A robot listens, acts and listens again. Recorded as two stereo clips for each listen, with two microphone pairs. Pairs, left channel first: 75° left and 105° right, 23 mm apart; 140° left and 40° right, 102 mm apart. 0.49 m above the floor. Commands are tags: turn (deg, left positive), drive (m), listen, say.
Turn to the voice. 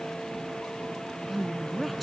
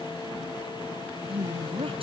<turn deg="-15"/>
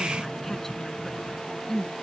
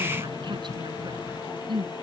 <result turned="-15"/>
<say>Facing the woman speaking.</say>